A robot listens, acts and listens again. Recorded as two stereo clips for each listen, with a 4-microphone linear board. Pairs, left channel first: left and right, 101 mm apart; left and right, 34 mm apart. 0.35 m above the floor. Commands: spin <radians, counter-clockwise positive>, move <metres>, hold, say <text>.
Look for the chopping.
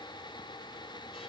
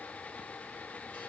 hold
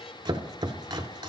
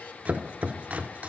spin -0.87
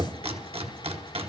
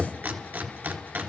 spin -1.48
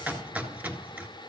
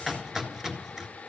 spin -0.26
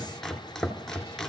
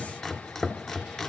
say Facing the chopping, 1 to 2 m away.